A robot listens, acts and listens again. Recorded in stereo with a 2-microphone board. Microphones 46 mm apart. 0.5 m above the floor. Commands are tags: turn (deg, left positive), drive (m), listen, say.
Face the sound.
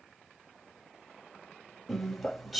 <turn deg="30"/>
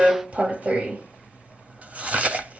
<turn deg="-35"/>
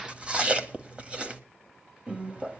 <turn deg="-25"/>
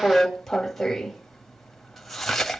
<say>Found it: chewing, straight ahead.</say>